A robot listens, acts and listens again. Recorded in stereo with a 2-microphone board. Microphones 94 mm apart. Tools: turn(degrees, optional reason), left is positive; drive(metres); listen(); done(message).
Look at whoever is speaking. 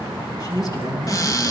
turn(degrees=45, reason="The man speaking: about 45° left or 135° left.")
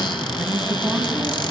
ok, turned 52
done("Found it: a man speaking, straight ahead.")